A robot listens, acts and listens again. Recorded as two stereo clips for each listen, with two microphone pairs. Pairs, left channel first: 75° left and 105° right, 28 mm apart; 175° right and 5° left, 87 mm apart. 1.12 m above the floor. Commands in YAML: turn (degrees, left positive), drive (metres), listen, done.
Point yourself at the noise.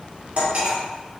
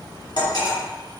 turn: -140
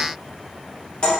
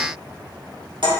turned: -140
turn: 20
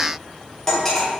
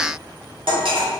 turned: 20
done: "Found it: cutlery clinking, straight ahead."